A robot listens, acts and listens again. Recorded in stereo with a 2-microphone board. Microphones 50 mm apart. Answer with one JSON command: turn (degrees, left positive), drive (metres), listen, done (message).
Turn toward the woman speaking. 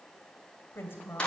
{"turn": 50}
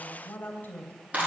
{"turn": 40}
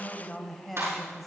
{"done": "Facing the woman speaking, 2 to 4 m away."}